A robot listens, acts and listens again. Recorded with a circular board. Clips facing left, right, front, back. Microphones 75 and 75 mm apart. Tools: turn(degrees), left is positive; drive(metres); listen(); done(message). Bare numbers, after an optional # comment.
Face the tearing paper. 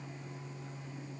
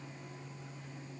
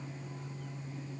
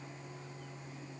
listen()
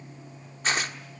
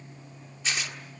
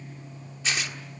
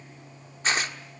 # The tearing paper: 135° left.
turn(135)
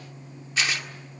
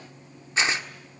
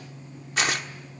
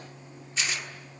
# The tearing paper is now 30° right.
turn(-30)
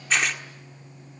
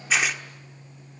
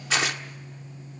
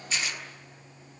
done("Found it: tearing paper, straight ahead, 1 to 2 m away.")